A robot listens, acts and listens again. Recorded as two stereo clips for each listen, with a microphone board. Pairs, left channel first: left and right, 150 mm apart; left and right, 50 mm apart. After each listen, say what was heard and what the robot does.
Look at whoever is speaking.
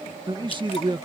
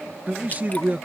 The man speaking: about 30° right or 150° right. Turn 30° right.
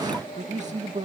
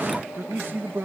So it is at 130° right. Turn 130° right.
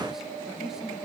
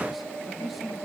Keep listening.
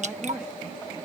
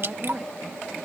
Keep listening.
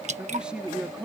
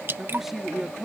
Found it: a man speaking, straight ahead.